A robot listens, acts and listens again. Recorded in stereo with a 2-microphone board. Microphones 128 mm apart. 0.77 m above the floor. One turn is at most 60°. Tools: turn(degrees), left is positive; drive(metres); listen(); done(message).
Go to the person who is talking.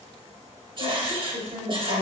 turn(degrees=-60)
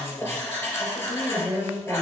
turn(degrees=-15)
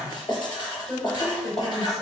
drive(metres=1.0)
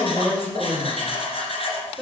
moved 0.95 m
drive(metres=1.0)
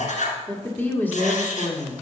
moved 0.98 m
turn(degrees=15)
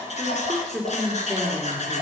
drive(metres=1.0)
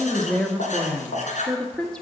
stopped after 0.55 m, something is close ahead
done("Arrived at the woman speaking, straight ahead.")